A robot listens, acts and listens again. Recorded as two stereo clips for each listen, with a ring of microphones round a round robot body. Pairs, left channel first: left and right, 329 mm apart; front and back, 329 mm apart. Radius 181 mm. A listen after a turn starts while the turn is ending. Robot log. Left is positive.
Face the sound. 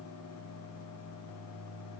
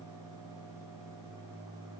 cmd idle
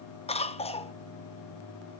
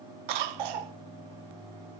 note: The cough: 165° left.
cmd yaw +165
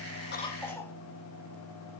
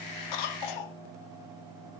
end: Facing the cough, 1 to 2 m away.